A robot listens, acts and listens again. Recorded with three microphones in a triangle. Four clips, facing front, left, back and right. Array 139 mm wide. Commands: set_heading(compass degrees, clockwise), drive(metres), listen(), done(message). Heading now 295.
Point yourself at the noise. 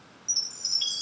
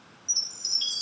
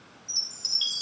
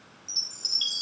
set_heading(345)
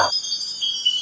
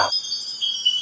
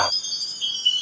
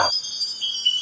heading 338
set_heading(348)
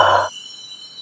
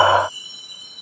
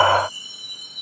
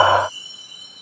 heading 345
done("Facing the chime.")